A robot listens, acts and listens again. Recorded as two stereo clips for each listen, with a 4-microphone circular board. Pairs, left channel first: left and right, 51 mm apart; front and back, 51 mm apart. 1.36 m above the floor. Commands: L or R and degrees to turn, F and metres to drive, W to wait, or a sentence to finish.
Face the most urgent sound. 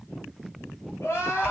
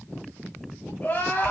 L55
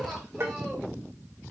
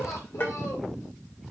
Found it: crying, straight ahead, over 4 m away.